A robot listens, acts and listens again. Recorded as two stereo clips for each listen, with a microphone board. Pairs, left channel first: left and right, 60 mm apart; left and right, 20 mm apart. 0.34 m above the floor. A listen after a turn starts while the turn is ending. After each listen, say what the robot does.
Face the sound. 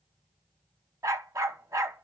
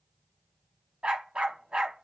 Turn 70° right.
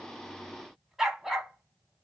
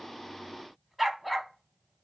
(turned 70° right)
Found it: a dog barking, straight ahead.